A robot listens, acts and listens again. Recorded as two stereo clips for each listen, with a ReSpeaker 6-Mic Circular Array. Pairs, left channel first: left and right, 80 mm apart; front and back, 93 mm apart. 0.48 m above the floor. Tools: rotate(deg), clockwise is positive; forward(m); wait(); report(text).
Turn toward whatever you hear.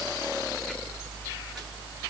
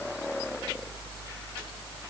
wait()
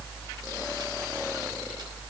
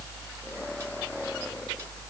wait()
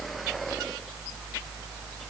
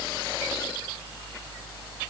report("I can't make out anything.")